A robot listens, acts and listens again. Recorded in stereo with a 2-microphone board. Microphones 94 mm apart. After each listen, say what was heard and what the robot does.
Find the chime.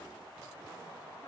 Keep listening.
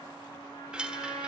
Turn 30° right.
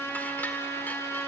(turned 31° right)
Keep listening.
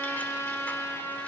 Keep listening.
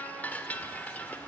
So it is at 20° left. Turn 20° left.
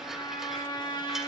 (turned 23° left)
Keep listening.
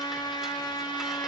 Keep listening.
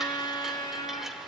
I heard a chime from this way, but can't make it out now.